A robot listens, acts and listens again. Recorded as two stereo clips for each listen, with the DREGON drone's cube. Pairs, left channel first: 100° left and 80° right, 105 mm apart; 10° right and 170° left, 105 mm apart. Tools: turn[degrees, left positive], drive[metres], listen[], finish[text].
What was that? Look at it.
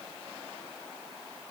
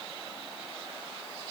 Action: listen[]
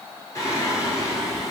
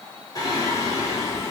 Thought: The singing: 45° left.
Action: turn[45]
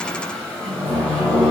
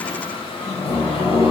Thought: The singing is now 20° left.
Action: turn[20]
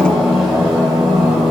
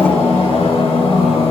Thought: The singing is now 10° left.
Action: turn[10]
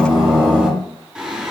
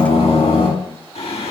Action: finish[Facing the singing, over 4 m away.]